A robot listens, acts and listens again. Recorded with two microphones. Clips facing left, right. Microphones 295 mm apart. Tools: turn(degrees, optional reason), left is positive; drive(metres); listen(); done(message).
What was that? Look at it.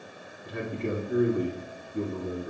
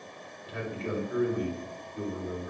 turn(degrees=55, reason="The man speaking: about 55° left or 125° left.")
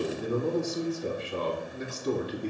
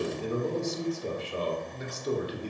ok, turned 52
turn(degrees=70, reason="So it is at 70° left.")
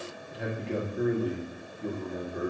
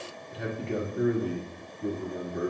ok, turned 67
done("Found it: a man speaking, straight ahead, 1 to 2 m away.")